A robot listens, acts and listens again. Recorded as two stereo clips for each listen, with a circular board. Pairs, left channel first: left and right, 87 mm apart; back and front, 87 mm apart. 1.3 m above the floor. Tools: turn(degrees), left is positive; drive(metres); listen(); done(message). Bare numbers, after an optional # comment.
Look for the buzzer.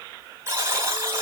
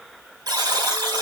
# The buzzer: 35° right.
turn(-35)
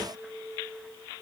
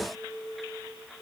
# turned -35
done("Facing the buzzer, 2 to 4 m away.")